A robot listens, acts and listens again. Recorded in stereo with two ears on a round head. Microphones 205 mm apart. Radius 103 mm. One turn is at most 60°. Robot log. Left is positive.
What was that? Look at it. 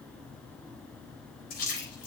note: The splash: about 40° left or 140° left.
cmd yaw +40
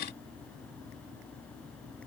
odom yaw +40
cmd idle
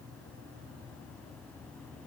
end: I heard a splash, but can't make it out now. It was about straight ahead or 100° left.